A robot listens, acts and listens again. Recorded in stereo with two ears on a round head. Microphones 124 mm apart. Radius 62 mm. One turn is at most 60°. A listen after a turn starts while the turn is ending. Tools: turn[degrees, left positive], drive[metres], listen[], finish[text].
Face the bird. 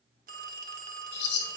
Action: turn[60]
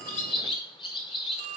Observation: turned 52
Thought: So it is at 35° left.
Action: turn[35]
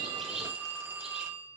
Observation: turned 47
Thought: Nothing new. It was at 10° right.
Action: turn[-10]
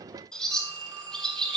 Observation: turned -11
Action: finish[Facing the bird.]